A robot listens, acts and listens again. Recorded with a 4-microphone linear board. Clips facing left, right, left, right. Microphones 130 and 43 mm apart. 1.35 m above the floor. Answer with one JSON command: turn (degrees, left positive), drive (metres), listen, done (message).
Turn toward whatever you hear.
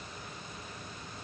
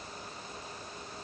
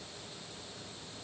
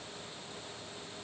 {"listen": true}
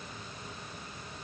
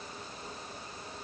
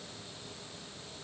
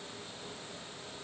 {"listen": true}
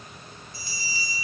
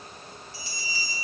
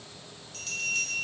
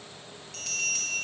{"turn": -90}
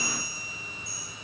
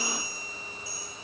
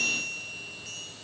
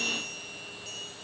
{"done": "Facing the bell."}